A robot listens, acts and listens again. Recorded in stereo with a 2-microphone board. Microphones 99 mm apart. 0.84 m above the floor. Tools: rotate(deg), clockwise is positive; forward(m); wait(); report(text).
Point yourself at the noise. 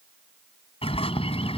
rotate(-75)
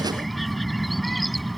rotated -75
report("Facing the bird.")